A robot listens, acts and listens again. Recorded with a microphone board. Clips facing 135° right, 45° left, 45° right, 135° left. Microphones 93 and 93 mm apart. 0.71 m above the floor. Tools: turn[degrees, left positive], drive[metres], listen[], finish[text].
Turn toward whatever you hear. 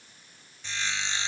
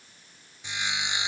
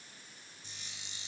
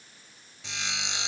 Thought: The sawing: 120° left.
Action: turn[120]
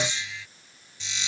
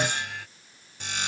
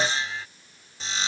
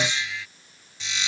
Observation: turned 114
Action: finish[Facing the sawing.]